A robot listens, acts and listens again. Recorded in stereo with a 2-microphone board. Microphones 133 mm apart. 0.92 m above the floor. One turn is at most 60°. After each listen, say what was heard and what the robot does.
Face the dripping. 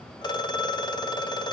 Keep listening.
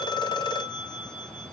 Keep listening.
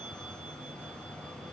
I can't make out dripping to turn to.